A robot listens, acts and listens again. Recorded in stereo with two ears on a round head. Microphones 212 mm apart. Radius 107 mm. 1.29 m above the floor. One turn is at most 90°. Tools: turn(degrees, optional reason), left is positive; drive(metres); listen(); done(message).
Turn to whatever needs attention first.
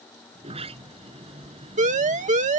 turn(degrees=-30, reason="The siren: about 30° right or 150° right.")
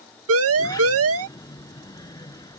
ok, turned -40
turn(degrees=-90, reason="So it is at 105° right.")
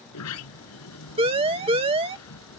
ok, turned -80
turn(degrees=-25, reason="The siren is now 25° right.")
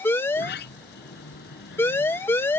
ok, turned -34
turn(degrees=10, reason="The siren is now 10° left.")
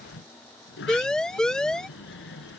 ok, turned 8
done("Facing the siren.")